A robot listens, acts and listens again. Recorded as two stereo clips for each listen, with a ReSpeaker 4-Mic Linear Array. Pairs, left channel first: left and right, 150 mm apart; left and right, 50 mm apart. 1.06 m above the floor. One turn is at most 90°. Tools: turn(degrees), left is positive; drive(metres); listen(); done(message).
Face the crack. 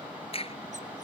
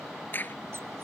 turn(degrees=40)
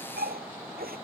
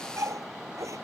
listen()
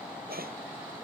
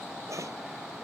done("I heard a crack, but can't make it out now. It was about straight ahead or 100° left.")